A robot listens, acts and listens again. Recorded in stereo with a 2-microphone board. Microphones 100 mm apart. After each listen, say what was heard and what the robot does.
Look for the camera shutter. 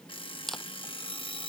Turn 30° left.
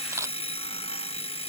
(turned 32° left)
Keep listening.
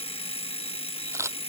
So it is at 30° right. Turn 30° right.
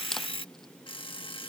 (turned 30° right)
Keep listening.
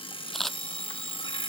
Facing the camera shutter.